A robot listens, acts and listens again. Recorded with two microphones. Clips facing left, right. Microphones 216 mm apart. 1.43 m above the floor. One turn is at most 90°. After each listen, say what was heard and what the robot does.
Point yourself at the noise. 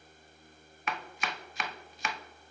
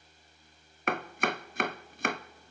The chopping: about 55° right or 125° right. Turn 55° right.
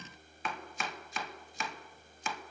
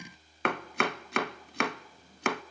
So it is at 70° right. Turn 70° right.
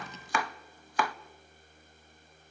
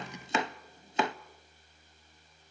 The chopping is now 25° right. Turn 25° right.
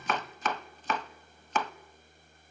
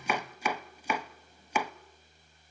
The chopping is now 10° right. Turn 10° right.
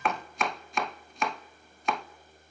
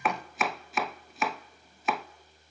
Facing the chopping, under 1 m away.